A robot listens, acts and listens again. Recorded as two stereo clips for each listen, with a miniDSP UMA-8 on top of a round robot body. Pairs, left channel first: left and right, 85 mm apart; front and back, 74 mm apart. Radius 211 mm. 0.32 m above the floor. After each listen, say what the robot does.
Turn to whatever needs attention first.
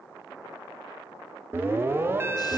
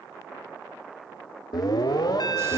Turn 25° right.
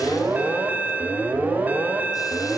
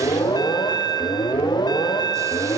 Turn 20° right.
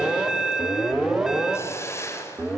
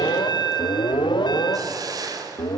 Facing the alarm, 1 to 2 m away.